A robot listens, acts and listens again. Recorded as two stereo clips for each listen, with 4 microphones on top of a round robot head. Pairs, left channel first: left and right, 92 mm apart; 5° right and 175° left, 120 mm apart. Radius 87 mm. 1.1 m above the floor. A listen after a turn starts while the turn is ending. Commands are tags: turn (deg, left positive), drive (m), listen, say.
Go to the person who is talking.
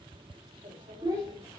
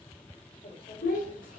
<turn deg="-20"/>
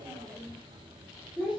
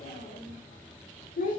<drive m="1.0"/>
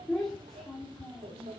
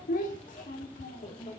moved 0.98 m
<drive m="1.0"/>
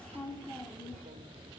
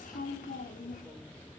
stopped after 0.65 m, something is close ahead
<turn deg="10"/>
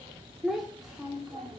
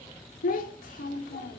<say>Arrived at the child speaking, straight ahead.</say>